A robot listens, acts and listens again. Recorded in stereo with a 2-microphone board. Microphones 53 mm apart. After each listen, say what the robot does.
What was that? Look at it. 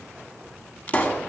Turn 35° left.
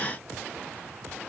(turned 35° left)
Keep listening.
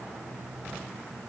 I heard a pop, but can't make it out now. It was about straight ahead or 110° left.